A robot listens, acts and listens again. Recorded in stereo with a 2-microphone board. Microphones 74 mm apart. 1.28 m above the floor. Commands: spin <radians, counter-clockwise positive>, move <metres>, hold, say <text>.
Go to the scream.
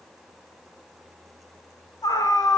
spin 1.13
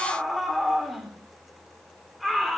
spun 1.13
move 1.0
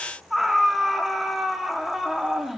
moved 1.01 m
move 1.0
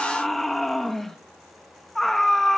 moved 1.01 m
move 1.0
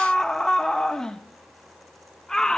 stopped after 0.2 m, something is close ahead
spin 0.17
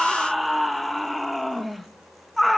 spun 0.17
say I am next to the scream.